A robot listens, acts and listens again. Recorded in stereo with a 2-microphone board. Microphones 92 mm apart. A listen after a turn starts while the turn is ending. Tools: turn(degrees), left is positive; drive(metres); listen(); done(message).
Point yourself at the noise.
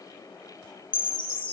turn(degrees=55)
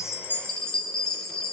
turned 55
done("Found it: a chime, straight ahead.")